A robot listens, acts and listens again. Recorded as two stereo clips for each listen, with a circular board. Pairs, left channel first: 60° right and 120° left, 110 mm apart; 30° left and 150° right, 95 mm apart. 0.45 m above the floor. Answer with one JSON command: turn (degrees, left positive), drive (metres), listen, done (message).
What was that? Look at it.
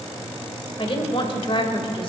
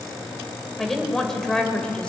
{"turn": -45}
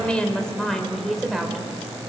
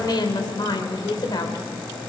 {"turn": 35}
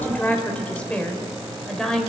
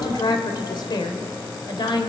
{"turn": 25}
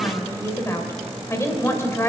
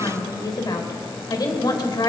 {"done": "Found it: a woman speaking, straight ahead."}